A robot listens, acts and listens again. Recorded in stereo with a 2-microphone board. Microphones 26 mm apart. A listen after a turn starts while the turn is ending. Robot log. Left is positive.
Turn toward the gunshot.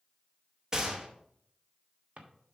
note: The gunshot: about 25° right or 155° right.
cmd yaw -25
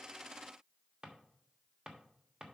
cmd idle
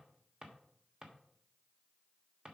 end: I heard a gunshot, but can't make it out now. It was about straight ahead or 130° right.